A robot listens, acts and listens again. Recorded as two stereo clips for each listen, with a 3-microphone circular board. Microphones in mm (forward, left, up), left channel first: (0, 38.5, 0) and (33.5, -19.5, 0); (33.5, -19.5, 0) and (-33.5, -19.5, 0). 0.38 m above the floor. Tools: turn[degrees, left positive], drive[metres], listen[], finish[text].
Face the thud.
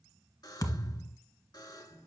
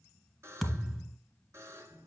Thought: The thud: 90° left.
Action: turn[90]
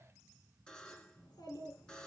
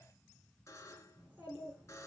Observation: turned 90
Action: finish[Facing where the thud came from. I can't hear it now.]